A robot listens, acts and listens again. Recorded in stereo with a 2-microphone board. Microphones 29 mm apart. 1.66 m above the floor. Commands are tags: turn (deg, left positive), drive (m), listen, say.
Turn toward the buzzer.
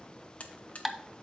<turn deg="50"/>
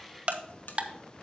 <listen/>
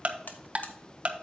<listen/>
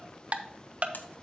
<say>I heard a buzzer, but can't make it out now. It was about straight ahead or 80° left.</say>